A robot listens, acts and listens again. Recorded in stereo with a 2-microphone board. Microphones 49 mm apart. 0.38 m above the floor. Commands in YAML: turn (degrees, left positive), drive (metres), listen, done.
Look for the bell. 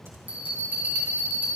turn: -35
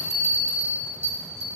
turn: -105
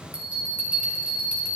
turn: -30
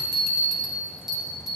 turn: -10
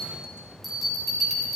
done: "Facing the bell, 2 to 4 m away."